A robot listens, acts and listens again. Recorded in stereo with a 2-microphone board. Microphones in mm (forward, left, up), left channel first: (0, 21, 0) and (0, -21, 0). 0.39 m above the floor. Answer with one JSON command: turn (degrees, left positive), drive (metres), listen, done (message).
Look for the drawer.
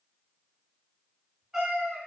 {"listen": true}
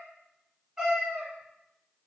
{"listen": true}
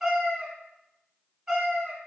{"done": "I can't make out a drawer to turn to."}